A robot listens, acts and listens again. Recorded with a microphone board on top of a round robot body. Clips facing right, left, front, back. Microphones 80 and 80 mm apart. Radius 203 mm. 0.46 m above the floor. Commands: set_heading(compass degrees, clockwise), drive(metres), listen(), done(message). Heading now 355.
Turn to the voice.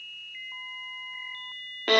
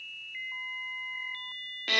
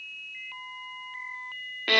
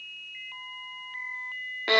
listen()
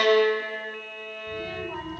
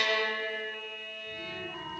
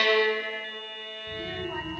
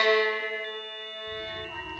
set_heading(55)
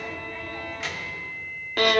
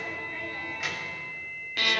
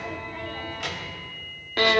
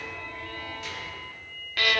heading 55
done("Facing the child speaking, 2 to 4 m away.")